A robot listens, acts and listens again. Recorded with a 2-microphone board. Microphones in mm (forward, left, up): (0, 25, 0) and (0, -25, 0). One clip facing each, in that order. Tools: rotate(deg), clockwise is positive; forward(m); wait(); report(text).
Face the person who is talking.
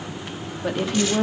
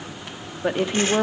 rotate(25)
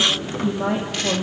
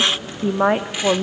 rotate(130)
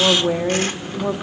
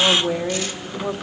rotate(-10)
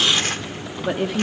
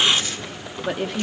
report("Facing the woman speaking, 1 to 2 m away.")